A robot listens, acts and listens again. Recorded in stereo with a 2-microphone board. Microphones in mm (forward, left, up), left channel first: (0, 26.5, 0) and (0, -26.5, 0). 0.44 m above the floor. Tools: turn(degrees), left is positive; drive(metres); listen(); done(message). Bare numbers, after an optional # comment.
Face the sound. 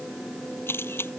# The camera shutter: about 50° left or 130° left.
turn(50)
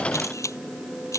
# So it is at 80° left.
turn(80)
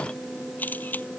# The camera shutter is now 35° left.
turn(35)
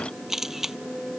done("Found it: a camera shutter, straight ahead.")